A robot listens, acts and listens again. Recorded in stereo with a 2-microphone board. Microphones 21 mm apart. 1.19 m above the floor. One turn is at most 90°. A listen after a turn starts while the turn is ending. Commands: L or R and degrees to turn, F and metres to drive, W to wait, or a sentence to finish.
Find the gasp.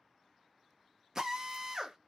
W
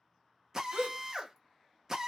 R70
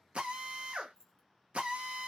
W
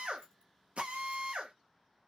I heard a gasp, but can't make it out now. It was about straight ahead or 40° right.